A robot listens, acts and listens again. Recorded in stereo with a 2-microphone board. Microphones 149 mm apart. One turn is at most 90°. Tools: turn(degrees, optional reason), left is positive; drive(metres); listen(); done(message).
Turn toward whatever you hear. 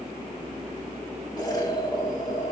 turn(degrees=25, reason="The explosion: about 25° left or 155° left.")
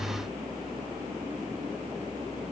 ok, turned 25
listen()
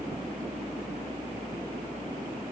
done("I heard an explosion, but can't make it out now. It was about straight ahead or 130° left.")